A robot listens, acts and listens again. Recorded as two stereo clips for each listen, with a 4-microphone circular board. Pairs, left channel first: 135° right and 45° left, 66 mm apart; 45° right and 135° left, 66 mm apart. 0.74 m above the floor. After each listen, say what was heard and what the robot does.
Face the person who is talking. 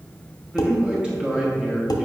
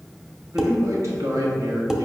The man speaking: 120° left. Turn 120° left.
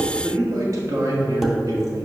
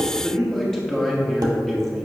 The man speaking is now 40° left. Turn 40° left.
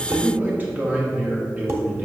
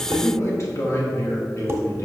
The man speaking is now 15° right. Turn 15° right.
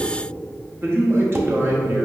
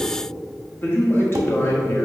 Found it: a man speaking, straight ahead, 1 to 2 m away.